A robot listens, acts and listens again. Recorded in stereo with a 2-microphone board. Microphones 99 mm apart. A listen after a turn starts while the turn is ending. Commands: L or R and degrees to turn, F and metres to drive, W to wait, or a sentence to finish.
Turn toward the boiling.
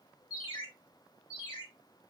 W
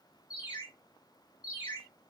W
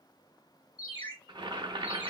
R45
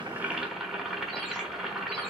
Found it: boiling, straight ahead.